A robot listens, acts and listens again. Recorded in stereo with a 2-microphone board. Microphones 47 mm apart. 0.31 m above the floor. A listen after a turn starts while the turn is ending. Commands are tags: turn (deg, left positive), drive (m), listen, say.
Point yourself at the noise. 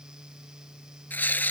<turn deg="40"/>
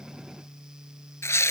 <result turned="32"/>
<turn deg="105"/>
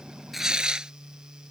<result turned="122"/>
<turn deg="-15"/>
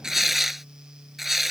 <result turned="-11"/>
<say>Found it: tearing paper, straight ahead.</say>